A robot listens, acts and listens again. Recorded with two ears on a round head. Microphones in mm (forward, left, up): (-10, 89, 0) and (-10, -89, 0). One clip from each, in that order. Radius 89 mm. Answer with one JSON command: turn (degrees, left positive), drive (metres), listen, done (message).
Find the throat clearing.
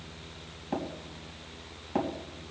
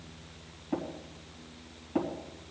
{"listen": true}
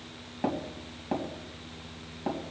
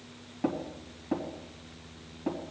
{"listen": true}
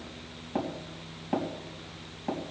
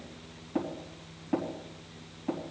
{"done": "I can't make out throat clearing to turn to."}